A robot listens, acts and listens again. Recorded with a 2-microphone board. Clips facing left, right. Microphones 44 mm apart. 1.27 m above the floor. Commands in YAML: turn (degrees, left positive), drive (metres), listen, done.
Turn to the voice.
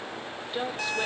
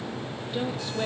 turn: 30
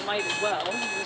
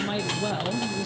turn: 15
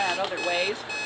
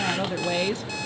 turn: 30
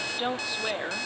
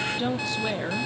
turn: 30
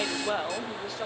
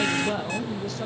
turn: 170
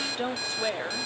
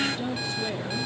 turn: 50
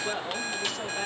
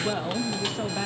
turn: -10
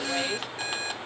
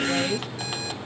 done: "Facing the woman speaking."